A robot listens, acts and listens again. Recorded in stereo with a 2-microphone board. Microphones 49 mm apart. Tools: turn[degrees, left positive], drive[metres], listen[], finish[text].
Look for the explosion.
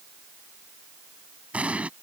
Thought: The explosion: about 30° right or 150° right.
Action: turn[-30]
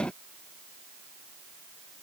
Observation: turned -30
Action: listen[]
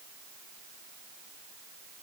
Action: finish[I heard an explosion, but can't make it out now. It was about straight ahead or 120° right.]